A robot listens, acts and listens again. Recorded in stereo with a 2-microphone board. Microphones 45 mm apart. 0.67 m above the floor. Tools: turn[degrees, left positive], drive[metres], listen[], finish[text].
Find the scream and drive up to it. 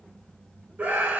Thought: The scream: about 35° right or 145° right.
Action: turn[-35]
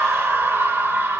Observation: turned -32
Thought: So it is at 110° right.
Action: turn[-110]
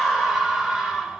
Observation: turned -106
Action: drive[1.0]
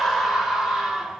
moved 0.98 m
Action: drive[1.0]
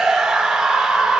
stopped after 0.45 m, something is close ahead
Thought: The scream is now 10° right.
Action: turn[-10]
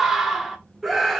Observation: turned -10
Action: finish[I am next to the scream.]